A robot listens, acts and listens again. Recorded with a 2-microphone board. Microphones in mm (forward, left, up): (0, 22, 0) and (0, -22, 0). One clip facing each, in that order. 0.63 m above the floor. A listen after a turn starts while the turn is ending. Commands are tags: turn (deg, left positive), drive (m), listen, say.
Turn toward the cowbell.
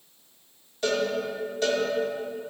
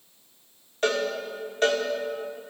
<turn deg="-45"/>
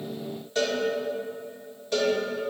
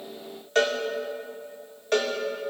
<turn deg="-80"/>
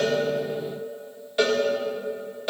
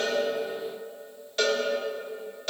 <turn deg="15"/>
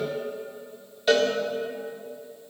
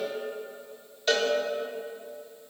<say>Facing the cowbell, 1 to 2 m away.</say>